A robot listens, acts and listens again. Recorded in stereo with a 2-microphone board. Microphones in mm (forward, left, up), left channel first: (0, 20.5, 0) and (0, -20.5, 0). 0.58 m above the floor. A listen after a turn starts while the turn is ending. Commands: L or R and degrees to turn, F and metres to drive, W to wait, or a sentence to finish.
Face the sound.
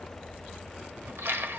R90
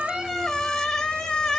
L10
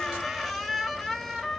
Facing the squeak.